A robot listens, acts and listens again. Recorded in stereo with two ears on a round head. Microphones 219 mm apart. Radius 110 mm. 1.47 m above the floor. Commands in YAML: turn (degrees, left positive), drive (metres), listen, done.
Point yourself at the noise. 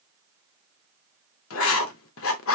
turn: 60
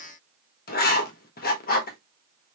turn: 45
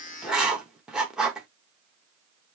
done: "Facing the writing."